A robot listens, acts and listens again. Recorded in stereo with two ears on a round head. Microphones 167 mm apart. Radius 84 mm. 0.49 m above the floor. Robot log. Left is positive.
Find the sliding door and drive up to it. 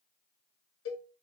cmd idle
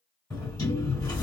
note: The sliding door: about 20° left or 160° left.
cmd yaw +20
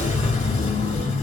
note: So it is at 140° left.
cmd yaw +140
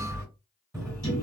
note: The sliding door is now 15° right.
cmd yaw -15
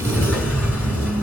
cmd fwd 1.0
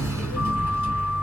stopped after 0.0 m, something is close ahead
note: The sliding door is now 10° right.
cmd yaw -10
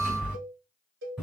end: Something is in my way. I am facing the sliding door but have not reached it.